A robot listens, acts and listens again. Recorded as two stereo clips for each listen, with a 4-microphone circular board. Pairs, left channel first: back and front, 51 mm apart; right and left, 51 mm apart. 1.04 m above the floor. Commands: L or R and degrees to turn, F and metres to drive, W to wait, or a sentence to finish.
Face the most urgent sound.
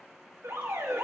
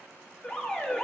R10
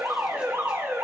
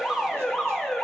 Facing the alarm, 1 to 2 m away.